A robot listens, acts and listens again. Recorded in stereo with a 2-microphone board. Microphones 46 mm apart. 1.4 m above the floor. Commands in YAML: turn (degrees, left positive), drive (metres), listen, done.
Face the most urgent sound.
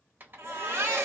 turn: -75
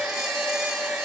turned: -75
listen: true
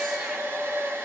listen: true
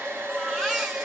done: "Facing the baby crying."